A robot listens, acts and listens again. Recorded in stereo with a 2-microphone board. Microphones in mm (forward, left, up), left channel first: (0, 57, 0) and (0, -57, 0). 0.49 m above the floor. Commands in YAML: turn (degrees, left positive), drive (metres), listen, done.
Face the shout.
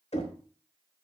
listen: true
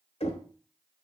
listen: true
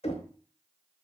done: "I can't make out a shout to turn to."